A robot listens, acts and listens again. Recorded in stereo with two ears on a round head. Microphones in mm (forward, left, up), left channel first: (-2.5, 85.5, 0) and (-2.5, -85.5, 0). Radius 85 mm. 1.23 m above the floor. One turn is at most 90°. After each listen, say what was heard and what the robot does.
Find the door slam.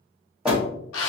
Turn 30° right.
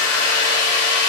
Keep listening.
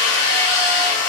I heard a door slam, but can't make it out now. It was about 25° left or 145° right.